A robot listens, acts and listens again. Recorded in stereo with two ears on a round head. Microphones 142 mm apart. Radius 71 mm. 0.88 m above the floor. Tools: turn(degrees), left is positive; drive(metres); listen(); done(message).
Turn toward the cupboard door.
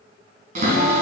turn(degrees=-50)
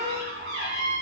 turn(degrees=-80)
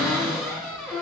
done("Found it: a cupboard door, straight ahead.")